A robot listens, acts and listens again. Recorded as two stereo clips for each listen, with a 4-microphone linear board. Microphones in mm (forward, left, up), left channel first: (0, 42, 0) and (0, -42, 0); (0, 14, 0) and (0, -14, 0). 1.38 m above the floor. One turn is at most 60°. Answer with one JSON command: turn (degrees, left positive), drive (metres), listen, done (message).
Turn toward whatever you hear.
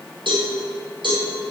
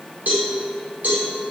{"turn": -60}
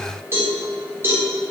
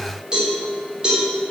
{"turn": -30}
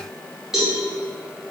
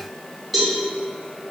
{"done": "Found it: a cowbell, straight ahead."}